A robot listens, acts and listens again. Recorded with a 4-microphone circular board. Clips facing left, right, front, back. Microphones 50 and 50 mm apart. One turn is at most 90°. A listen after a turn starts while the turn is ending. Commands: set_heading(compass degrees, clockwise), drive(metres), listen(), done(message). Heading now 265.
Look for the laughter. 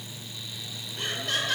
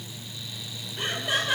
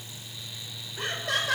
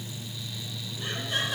set_heading(275)
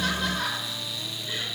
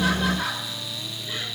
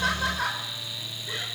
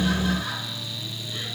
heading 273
done("Found it: laughter, straight ahead, over 4 m away.")